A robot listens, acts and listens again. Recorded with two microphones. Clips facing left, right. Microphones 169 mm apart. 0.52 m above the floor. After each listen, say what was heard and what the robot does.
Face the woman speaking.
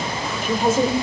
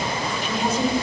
The woman speaking: about 50° left or 130° left. Turn 50° left.
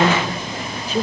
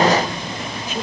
So it is at 35° left. Turn 35° left.
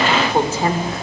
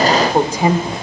The woman speaking is now 20° right. Turn 20° right.
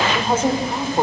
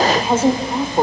The woman speaking is now 15° right. Turn 15° right.
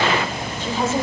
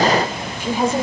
The woman speaking is now 15° right. Turn 15° right.
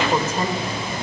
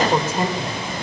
The woman speaking is now 10° right. Turn 10° right.
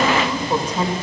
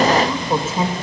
Facing the woman speaking.